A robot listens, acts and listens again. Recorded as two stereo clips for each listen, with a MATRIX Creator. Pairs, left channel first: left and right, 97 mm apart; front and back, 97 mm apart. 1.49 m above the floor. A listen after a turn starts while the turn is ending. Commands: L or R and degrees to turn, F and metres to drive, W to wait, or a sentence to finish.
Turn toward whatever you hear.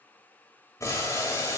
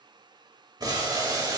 L140
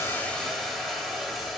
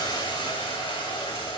Found it: boiling, straight ahead, 2 to 4 m away.